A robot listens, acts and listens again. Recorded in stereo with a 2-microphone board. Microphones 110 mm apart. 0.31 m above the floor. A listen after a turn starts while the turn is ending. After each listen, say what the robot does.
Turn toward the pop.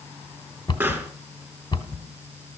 Turn 15° right.
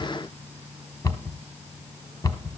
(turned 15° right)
Keep listening.
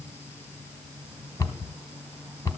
I heard a pop, but can't make it out now. It was about straight ahead or 150° right.